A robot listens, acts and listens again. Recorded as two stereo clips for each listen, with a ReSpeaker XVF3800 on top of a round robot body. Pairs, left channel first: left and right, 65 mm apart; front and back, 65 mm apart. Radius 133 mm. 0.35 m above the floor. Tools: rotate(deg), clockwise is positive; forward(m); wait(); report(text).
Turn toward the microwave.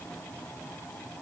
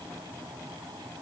wait()
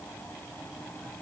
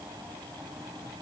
wait()
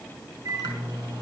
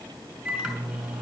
rotate(95)
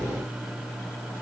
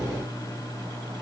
report("Facing the microwave.")